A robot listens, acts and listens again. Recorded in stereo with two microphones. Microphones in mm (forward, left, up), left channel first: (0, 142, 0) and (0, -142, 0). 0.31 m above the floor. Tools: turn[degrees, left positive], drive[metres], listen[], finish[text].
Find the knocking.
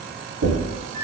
Thought: The knocking: about 50° right or 130° right.
Action: turn[-50]
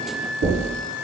Thought: So it is at 65° right.
Action: turn[-65]
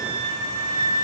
Action: listen[]
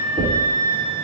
Action: finish[Found it: knocking, straight ahead.]